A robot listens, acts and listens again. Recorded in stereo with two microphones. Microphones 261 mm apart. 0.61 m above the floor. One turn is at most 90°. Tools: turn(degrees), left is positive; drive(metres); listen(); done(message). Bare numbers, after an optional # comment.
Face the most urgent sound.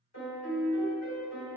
listen()
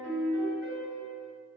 listen()
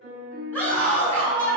turn(30)
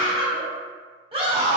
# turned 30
# So it is at 20° right.
turn(-20)
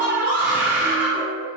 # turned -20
# The scream is now 10° right.
turn(-10)
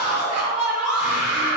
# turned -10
done("Facing the scream, 1 to 2 m away.")